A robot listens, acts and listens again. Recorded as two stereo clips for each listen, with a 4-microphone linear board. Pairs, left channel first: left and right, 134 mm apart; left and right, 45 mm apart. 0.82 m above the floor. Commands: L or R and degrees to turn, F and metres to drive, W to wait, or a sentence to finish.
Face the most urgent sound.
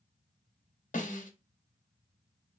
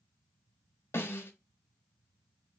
W
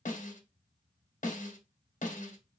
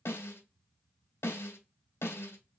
W
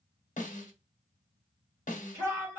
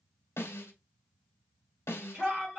R20
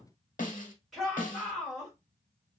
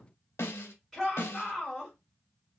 Facing the shout.